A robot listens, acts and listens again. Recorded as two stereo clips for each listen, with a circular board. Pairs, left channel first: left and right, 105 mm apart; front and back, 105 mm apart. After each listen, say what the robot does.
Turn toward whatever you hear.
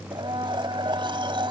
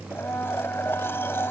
Turn 65° right.
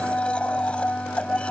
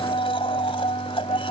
Turn 10° left.
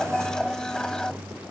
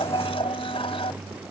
Facing the blender.